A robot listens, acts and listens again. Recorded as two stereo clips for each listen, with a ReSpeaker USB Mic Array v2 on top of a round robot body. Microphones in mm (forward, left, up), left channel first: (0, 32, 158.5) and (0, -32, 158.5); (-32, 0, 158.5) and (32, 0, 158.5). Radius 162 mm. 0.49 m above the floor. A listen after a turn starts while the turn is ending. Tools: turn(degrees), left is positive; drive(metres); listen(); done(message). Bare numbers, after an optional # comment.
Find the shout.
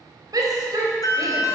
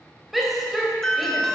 # The shout: 90° right.
turn(-90)
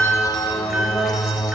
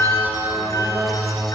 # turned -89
listen()
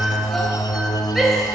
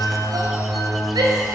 done("Facing the shout.")